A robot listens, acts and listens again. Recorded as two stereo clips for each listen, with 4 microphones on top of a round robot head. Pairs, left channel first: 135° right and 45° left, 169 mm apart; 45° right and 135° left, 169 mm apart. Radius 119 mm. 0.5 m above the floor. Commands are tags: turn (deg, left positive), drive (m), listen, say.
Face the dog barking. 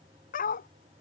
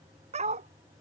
<turn deg="-175"/>
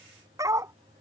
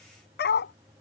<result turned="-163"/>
<turn deg="-30"/>
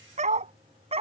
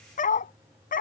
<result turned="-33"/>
<turn deg="-10"/>
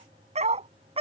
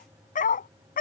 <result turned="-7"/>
<turn deg="-10"/>
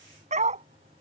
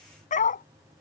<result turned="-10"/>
<say>Found it: a dog barking, straight ahead.</say>